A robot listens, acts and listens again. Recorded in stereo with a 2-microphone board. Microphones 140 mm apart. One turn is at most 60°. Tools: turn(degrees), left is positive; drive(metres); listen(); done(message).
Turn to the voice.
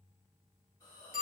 listen()
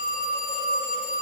listen()
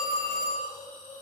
done("I can't make out anyone speaking to turn to.")